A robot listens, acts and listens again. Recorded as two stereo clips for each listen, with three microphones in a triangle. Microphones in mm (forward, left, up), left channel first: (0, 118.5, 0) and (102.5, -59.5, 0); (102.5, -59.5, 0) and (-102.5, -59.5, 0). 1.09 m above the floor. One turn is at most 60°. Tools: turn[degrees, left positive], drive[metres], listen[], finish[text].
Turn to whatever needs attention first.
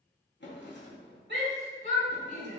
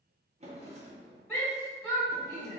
Thought: The shout: 75° right.
Action: turn[-60]
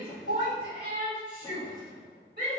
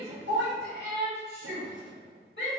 Thought: The shout is now 20° right.
Action: turn[-20]
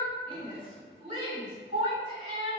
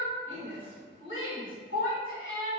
Action: finish[Found it: a shout, straight ahead, 2 to 4 m away.]